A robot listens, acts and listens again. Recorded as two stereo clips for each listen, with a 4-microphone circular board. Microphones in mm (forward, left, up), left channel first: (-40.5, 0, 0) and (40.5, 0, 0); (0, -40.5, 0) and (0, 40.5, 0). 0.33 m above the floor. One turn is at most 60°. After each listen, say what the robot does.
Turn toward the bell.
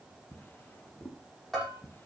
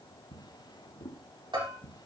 Turn 60° left.
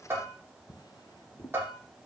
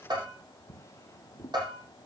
Turn 60° left.
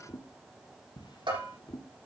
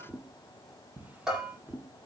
Found it: a bell, straight ahead.